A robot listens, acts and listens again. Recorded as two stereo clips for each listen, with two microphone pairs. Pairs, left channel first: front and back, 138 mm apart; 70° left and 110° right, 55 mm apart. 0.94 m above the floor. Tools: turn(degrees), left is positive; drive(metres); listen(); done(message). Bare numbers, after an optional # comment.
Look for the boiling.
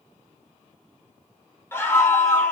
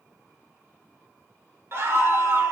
listen()
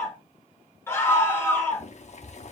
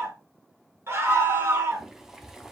# The boiling: 35° right.
turn(-35)
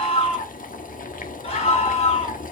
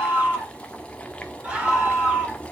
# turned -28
done("Facing the boiling, 1 to 2 m away.")